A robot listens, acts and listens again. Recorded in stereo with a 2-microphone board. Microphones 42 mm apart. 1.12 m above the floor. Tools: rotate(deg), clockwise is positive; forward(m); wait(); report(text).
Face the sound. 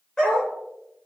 rotate(-15)
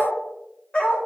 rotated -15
rotate(-30)
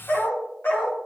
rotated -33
rotate(-120)
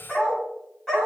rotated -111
rotate(-10)
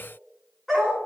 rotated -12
report("Facing the dog barking.")